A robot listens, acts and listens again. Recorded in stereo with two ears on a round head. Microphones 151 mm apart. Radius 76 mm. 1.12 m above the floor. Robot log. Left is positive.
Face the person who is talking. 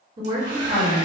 note: The woman speaking: about 30° right or 150° right.
cmd yaw -30
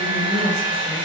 cmd idle
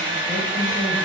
cmd idle
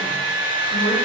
end: I heard a woman speaking, but can't make it out now. It was about straight ahead or 120° right.